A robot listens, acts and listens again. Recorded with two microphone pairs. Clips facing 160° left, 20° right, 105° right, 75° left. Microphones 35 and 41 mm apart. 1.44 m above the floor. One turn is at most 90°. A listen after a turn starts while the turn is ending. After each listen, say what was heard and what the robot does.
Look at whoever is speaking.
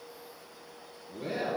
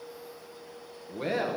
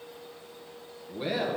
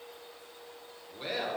The man speaking: 15° right. Turn 15° right.
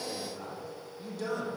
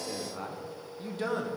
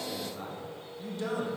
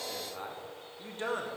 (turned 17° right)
The man speaking is now 35° left. Turn 35° left.
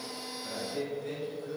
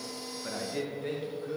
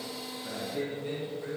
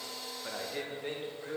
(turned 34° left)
The man speaking is now 40° left. Turn 40° left.
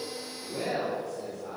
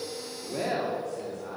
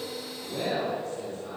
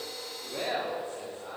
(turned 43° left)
The man speaking is now 20° left. Turn 20° left.
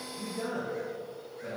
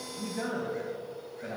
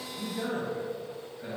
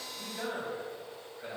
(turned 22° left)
Facing the man speaking, 2 to 4 m away.